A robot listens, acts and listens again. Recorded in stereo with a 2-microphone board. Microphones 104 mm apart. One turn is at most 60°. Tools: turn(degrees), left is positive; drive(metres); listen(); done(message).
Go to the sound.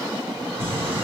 turn(degrees=-60)
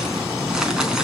drive(metres=1.0)
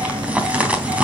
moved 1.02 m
turn(degrees=-15)
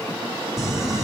drive(metres=1.0)
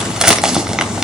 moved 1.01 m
drive(metres=1.0)
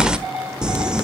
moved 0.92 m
turn(degrees=-10)
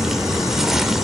drive(metres=1.0)
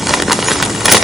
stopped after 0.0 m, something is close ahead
done("I am next to the crumpling.")